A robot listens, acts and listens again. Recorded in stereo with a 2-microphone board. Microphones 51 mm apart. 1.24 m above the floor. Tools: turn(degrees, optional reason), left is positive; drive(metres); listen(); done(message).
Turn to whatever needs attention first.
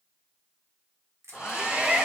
turn(degrees=-20, reason="The shout: about 20° right or 160° right.")
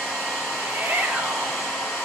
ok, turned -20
turn(degrees=-135, reason="So it is at 135° right.")
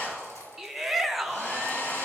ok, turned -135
done("Facing the shout.")